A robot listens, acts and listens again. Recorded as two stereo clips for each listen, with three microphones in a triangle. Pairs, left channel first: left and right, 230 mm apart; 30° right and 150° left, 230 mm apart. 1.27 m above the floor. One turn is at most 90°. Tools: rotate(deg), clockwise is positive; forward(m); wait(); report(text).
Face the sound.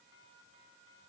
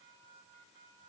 wait()
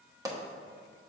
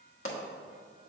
rotate(15)
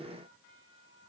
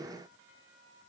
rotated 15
report("I heard a pop from this way, but can't make it out now.")